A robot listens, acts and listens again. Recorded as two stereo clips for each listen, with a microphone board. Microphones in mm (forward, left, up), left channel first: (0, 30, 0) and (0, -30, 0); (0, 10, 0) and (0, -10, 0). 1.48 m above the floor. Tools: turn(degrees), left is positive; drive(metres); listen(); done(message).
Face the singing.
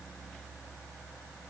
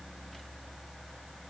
listen()
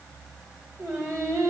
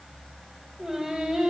turn(degrees=-60)
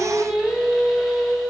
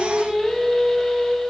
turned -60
done("Facing the singing.")